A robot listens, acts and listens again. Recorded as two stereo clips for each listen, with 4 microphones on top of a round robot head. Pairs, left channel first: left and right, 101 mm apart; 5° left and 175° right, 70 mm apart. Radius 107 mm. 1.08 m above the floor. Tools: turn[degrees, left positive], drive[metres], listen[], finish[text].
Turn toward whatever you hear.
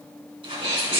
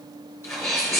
Thought: The sneeze: 60° right.
Action: turn[-60]
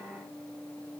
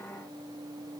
Action: finish[I heard a sneeze from this way, but can't make it out now.]